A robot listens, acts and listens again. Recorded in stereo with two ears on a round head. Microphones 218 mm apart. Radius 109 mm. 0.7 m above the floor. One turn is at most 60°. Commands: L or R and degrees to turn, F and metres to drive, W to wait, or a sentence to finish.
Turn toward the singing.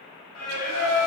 L60
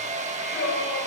L45
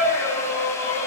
Found it: singing, straight ahead, 2 to 4 m away.